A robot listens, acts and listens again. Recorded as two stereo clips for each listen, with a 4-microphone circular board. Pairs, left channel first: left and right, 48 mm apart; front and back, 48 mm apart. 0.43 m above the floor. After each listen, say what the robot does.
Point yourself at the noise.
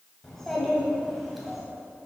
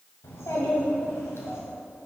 Found it: a child speaking, straight ahead.